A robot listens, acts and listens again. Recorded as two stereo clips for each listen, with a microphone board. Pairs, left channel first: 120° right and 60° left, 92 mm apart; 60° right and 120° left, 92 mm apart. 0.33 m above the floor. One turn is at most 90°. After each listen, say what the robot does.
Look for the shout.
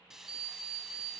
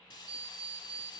Keep listening.
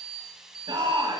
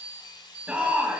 Turn 45° left.
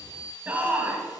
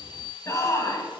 Turn 10° right.
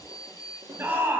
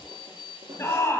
Facing the shout.